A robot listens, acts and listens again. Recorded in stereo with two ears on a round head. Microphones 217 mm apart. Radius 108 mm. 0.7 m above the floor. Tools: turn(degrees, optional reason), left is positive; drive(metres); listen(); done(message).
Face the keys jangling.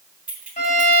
turn(degrees=-30)
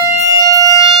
listen()
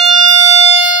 listen()
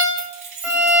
turn(degrees=-150, reason="So it is at 150° right.")
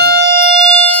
listen()
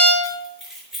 done("Found it: keys jangling, straight ahead, over 4 m away.")